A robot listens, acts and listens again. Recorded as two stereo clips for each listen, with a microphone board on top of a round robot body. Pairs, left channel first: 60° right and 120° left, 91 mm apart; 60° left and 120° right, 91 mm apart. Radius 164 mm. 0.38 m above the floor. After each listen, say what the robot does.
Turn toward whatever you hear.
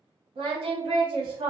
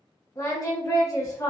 Turn 115° left.
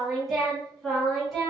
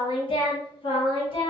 Turn 30° left.
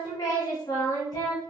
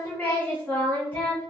Turn 15° right.
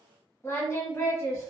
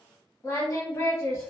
Found it: singing, straight ahead.